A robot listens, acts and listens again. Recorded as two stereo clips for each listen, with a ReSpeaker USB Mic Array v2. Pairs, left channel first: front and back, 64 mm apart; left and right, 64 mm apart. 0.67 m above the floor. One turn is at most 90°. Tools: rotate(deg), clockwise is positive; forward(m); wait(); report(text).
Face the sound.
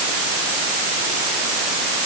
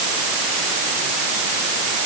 wait()
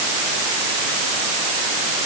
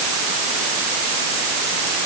wait()
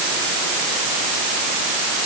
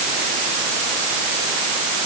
report("I can't make out anything.")